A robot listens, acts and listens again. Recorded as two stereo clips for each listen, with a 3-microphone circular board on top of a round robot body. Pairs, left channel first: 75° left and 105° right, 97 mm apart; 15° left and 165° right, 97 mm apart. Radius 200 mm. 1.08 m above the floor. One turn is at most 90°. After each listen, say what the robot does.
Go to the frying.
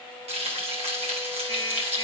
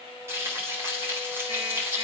Turn 90° right.
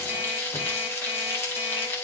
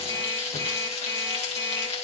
Turn 10° left.
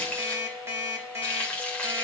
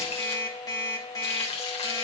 Drive 1.0 m forward.
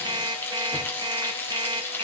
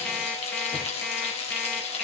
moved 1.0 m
Drive 1.0 m forward.
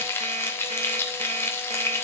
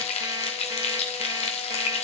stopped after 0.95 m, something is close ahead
Turn 10° left.
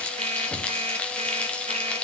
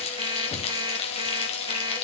Arrived at the frying, straight ahead.